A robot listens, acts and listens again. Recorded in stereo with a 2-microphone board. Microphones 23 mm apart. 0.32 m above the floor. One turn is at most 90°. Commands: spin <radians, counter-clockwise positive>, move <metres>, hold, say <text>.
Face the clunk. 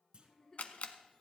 spin -0.79
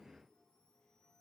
hold
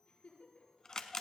say I heard a clunk, but can't make it out now. It was about straight ahead or 90° right.